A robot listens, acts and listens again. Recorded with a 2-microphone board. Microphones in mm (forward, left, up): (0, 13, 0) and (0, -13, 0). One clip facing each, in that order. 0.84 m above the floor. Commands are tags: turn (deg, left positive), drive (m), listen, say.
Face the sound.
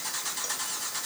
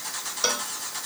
<turn deg="-75"/>
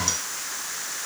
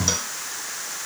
<listen/>
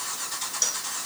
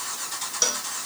<turn deg="-30"/>
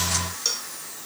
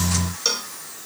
<turn deg="-30"/>
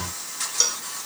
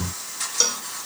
<turn deg="-10"/>
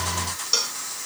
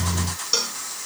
<say>Facing the cowbell.</say>